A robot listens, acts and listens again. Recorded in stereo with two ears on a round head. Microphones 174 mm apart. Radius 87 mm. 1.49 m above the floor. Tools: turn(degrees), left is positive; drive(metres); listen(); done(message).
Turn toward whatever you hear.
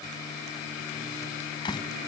turn(degrees=25)
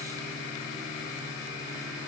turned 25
listen()
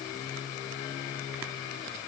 done("I heard a door slam, but can't make it out now. It was about straight ahead or 130° left.")